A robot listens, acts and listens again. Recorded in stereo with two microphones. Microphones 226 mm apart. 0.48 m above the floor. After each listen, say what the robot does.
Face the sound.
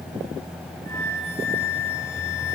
Turn 30° left.
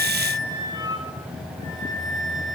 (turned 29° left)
Turn 20° right.
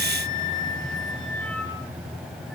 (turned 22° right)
Keep listening.
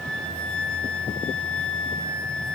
Found it: a flute, straight ahead, over 4 m away.